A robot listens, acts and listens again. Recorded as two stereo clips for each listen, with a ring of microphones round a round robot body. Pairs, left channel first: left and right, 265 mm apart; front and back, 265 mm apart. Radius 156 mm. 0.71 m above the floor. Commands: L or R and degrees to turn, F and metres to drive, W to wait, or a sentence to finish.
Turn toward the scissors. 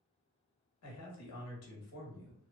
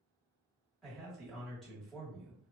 W
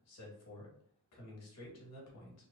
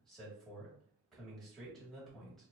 W
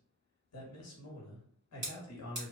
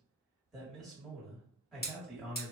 R50
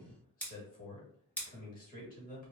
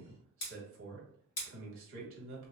Facing the scissors.